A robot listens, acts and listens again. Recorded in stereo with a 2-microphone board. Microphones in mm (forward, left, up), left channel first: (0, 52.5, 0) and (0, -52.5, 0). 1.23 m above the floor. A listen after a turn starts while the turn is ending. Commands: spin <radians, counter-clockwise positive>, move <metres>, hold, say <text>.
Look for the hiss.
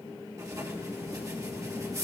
hold
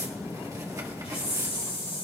spin 1.22
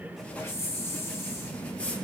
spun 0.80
spin 0.44
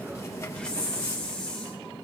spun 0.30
spin 0.17
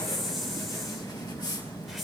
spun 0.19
say Found it: a hiss, straight ahead.